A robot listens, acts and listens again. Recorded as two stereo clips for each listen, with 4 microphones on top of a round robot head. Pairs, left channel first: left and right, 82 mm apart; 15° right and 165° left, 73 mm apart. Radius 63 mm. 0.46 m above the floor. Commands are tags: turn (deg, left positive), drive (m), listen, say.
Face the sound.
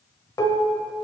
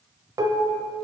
<turn deg="135"/>
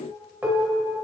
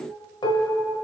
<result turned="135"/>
<turn deg="-15"/>
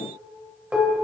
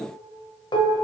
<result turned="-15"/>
<turn deg="-10"/>
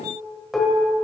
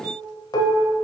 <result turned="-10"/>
<say>Facing the dishes clattering, 1 to 2 m away.</say>